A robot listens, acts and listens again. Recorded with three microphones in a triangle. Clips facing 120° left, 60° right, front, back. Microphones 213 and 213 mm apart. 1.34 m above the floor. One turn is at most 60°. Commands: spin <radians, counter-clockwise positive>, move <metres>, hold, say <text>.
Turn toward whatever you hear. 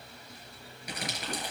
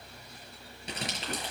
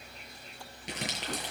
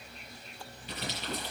say Facing the crumpling.